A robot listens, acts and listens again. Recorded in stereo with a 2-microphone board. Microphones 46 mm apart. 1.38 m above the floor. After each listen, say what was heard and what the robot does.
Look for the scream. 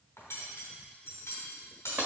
Keep listening.
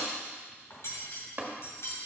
Keep listening.
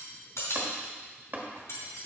I can't make out a scream, only tapping and cutlery clinking.